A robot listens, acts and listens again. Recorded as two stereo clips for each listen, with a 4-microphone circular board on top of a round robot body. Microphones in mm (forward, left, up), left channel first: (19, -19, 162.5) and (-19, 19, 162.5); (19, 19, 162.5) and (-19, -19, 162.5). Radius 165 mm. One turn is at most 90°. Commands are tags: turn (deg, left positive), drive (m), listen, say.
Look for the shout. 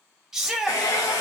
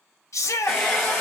<turn deg="55"/>
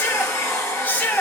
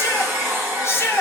<turn deg="15"/>
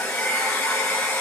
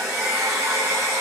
<listen/>
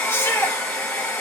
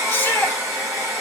<listen/>
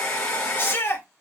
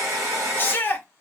<say>Found it: a shout, straight ahead, 1 to 2 m away.</say>